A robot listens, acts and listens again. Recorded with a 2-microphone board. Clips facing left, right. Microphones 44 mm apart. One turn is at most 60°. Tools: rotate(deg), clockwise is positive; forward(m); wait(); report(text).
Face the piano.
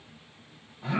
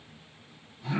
wait()
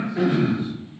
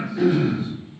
wait()
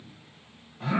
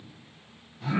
report("I can't make out a piano to turn to.")